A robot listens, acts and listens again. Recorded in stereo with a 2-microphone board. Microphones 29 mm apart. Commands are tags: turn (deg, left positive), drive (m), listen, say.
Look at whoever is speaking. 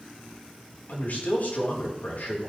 <turn deg="65"/>
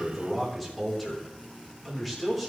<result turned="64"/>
<say>Facing the man speaking, 2 to 4 m away.</say>